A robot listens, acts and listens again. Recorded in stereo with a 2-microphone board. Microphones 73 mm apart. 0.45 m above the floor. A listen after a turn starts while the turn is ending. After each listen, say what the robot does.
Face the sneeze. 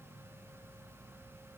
Keep listening.
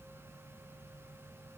Keep listening.
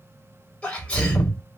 Turn 30° left.
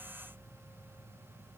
Keep listening.
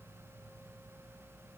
I heard a sneeze, but can't make it out now. It was about 15° right or 135° left.